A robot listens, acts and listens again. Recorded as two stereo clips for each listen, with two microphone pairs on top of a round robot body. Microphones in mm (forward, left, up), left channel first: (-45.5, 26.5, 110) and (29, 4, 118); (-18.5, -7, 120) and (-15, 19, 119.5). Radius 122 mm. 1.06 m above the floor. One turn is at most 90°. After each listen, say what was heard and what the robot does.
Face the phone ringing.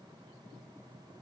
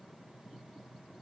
Keep listening.
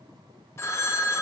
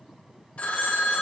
The phone ringing: 135° right. Turn 90° right.
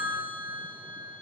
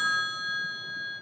The phone ringing is now 30° right. Turn 30° right.
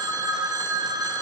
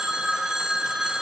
The phone ringing is now 20° left. Turn 20° left.
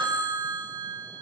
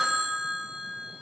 Found it: a phone ringing, straight ahead, under 1 m away.